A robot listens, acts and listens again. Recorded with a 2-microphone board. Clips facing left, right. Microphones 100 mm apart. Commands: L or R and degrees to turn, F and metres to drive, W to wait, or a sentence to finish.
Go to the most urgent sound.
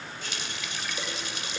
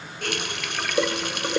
W
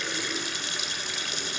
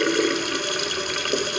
W
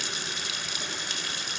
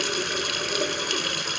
I can't make out anything urgent to turn to.